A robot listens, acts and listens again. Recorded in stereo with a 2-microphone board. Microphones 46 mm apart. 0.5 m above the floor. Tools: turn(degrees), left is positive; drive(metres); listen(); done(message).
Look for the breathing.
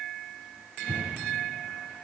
turn(degrees=55)
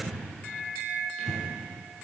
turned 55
done("Found it: breathing, straight ahead.")